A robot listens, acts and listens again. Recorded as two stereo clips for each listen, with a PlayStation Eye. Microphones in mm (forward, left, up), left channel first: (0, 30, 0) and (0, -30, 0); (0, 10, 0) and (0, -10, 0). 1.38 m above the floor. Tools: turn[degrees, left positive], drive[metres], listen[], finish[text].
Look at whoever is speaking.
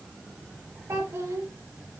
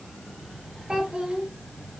Thought: The child speaking: about 55° right or 125° right.
Action: turn[-55]
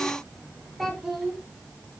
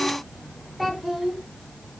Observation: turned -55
Action: finish[Facing the child speaking, 2 to 4 m away.]